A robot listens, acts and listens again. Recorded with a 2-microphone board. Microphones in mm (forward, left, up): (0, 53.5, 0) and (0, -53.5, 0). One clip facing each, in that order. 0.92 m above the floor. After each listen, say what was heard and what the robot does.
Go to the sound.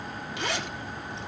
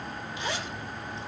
The zipper: about 70° left or 110° left. Turn 70° left.
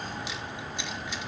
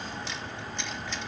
Keep listening.
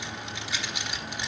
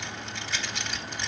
So it is at 10° left. Turn 10° left.
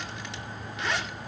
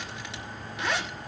Drive 1.0 m forward.
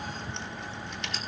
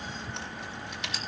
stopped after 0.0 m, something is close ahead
Something is in my way. I am facing the zipper but have not reached it.